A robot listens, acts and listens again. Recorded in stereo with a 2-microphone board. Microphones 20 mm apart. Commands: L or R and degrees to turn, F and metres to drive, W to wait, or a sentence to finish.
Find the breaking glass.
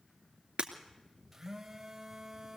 R55
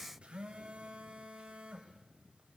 W
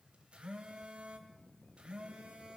I heard breaking glass, but can't make it out now. It was about straight ahead or 70° right.